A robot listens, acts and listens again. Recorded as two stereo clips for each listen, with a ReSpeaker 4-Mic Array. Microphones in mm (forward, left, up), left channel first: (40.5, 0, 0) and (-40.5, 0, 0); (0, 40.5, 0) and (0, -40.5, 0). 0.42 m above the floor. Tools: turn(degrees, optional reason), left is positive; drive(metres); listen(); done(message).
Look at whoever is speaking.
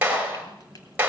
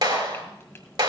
listen()
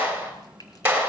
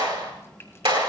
listen()
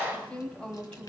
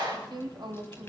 turn(degrees=-75, reason="The woman speaking: 75° right.")
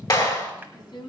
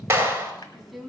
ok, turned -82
done("Found it: a woman speaking, straight ahead.")